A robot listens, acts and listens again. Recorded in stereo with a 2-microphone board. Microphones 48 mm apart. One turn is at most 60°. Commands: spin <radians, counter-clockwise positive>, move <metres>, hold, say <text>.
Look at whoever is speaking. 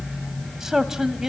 spin -0.52
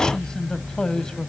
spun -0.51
spin 0.35
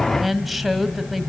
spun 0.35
say Found it: a man speaking, straight ahead.